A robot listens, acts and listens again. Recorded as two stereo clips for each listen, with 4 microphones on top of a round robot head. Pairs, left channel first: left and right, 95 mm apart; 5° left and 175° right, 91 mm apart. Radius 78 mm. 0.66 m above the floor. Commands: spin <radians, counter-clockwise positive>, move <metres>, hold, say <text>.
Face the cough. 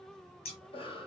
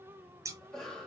spin 1.57
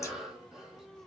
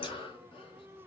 say Facing the cough.